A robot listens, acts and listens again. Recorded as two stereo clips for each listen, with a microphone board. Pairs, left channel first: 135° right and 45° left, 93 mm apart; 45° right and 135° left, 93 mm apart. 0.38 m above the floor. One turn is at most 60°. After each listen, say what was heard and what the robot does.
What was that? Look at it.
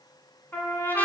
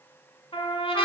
The trumpet: 65° right. Turn 60° right.
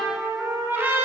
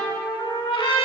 The trumpet is now 20° right. Turn 20° right.
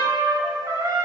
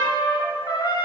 Facing the trumpet.